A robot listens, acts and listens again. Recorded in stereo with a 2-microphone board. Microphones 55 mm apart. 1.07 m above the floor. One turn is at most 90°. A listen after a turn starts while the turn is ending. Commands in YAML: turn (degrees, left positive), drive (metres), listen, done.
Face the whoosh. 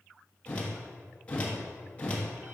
turn: 20
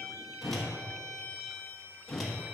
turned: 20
done: "Facing the whoosh."